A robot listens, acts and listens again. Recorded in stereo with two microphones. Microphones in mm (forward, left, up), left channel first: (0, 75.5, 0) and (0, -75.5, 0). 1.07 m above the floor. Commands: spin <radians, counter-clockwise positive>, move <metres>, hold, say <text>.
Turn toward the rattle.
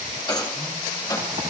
spin 0.44
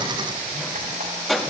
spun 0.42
say Facing the rattle, 1 to 2 m away.